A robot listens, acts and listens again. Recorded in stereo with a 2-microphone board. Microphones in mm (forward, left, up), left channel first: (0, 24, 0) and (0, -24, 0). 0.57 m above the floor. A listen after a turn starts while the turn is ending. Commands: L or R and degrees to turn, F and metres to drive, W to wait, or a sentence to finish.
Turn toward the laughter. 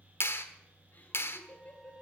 L35
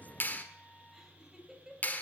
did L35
R10
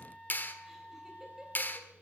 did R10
W
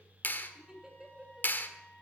R20
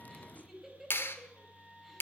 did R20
Facing the laughter, 2 to 4 m away.